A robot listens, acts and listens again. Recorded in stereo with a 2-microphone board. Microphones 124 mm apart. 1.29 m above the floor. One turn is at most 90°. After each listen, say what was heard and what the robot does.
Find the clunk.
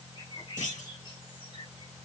Turn 90° left.
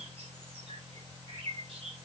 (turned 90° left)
I heard a clunk from this way, but can't make it out now.